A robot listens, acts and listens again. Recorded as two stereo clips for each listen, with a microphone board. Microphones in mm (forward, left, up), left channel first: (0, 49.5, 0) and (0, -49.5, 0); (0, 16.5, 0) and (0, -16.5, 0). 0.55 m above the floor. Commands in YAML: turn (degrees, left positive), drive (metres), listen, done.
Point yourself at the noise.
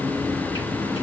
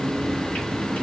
listen: true
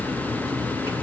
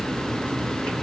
listen: true
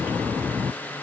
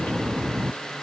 done: "I can't make out anything to turn to."